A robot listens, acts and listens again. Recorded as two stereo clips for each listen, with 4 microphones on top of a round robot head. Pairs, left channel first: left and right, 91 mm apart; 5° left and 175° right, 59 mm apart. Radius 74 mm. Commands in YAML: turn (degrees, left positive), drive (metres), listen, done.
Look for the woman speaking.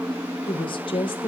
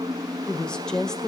turn: 85
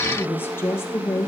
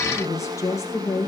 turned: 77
turn: 35
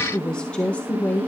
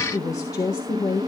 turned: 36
turn: 20
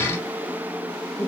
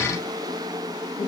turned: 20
listen: true
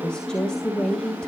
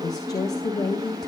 turn: 10
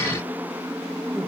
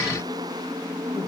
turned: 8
listen: true
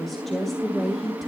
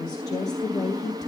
done: "Facing the woman speaking, 2 to 4 m away."